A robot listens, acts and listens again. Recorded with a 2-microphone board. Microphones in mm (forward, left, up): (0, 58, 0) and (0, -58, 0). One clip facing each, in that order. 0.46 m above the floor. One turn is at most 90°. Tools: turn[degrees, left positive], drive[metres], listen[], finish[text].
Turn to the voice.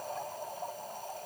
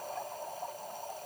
Action: listen[]
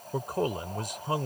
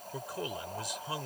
Thought: The man speaking: about 50° left or 130° left.
Action: turn[50]
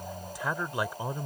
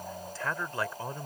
Thought: So it is at 15° left.
Action: turn[15]
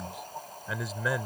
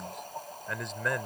Action: finish[Found it: a man speaking, straight ahead.]